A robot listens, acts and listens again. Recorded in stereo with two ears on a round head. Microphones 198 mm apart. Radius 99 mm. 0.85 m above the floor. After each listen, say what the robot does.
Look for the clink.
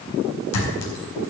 Turn 90° left.
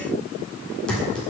Facing the clink.